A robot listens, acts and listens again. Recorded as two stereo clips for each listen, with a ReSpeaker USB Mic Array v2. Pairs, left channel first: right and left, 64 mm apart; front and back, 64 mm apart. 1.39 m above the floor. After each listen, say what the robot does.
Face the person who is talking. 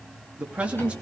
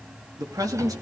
Turn 160° left.
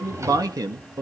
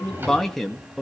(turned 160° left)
Turn 90° left.
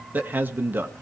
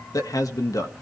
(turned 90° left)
Turn 35° left.
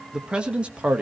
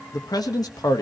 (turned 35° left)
Turn 20° left.
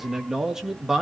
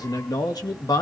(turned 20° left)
Facing the man speaking.